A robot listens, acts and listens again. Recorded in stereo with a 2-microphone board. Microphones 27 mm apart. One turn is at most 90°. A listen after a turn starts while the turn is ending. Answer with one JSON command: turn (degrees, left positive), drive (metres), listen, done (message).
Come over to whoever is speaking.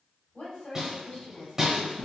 {"turn": 55}
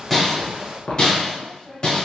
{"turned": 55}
{"turn": 45}
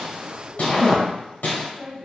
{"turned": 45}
{"drive": 1.0}
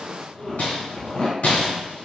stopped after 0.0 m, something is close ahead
{"listen": true}
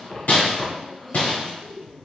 {"done": "Something is in my way. I am facing the woman speaking but have not reached it."}